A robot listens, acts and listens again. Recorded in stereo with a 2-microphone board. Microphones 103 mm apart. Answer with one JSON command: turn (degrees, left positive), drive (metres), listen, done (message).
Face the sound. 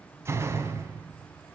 {"turn": -25}
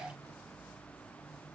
{"listen": true}
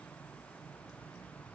{"done": "I heard a door slam, but can't make it out now. It was about straight ahead or 130° right."}